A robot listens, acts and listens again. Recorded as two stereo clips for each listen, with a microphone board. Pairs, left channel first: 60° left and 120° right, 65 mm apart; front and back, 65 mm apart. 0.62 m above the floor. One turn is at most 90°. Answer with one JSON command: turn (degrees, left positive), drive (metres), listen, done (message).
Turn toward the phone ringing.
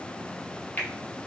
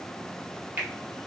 {"listen": true}
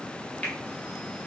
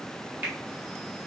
{"listen": true}
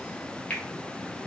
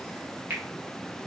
{"done": "I can't make out a phone ringing, only a finger snap."}